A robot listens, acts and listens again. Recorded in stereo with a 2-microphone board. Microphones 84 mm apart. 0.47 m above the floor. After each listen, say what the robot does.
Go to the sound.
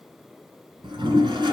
Turn 70° right.
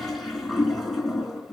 Drive 1.0 m forward.
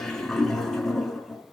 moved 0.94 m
Drive 1.0 m forward.
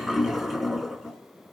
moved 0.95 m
Drive 1.0 m forward.
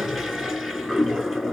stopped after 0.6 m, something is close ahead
Turn 10° right.
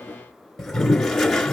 I am next to the toilet flushing.